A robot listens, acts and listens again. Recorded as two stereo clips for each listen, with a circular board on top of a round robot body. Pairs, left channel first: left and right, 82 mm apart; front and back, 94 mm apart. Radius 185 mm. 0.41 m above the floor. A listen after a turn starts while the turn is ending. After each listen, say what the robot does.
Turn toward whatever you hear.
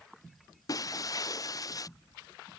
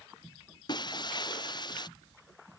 Turn 45° left.
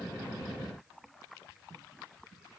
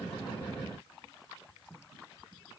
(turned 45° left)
I heard breaking glass from this way, but can't make it out now.